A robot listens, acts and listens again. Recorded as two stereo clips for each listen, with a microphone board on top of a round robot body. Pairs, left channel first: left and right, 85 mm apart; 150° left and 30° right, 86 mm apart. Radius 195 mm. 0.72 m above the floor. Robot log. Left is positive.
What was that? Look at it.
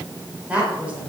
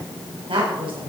note: The woman speaking: 15° right.
cmd yaw -15
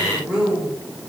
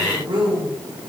note: The woman speaking is now 10° right.
cmd yaw -10
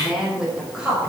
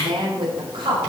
note: The woman speaking is now 10° right.
cmd yaw -10
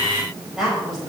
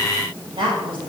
end: Found it: a woman speaking, straight ahead, over 4 m away.